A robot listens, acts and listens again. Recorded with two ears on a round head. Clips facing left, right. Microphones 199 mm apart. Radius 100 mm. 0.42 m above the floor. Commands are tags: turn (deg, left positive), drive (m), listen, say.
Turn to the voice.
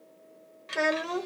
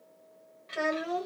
<turn deg="65"/>
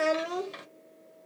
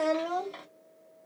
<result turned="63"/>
<turn deg="30"/>
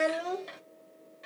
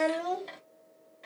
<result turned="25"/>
<say>Found it: a child speaking, straight ahead.</say>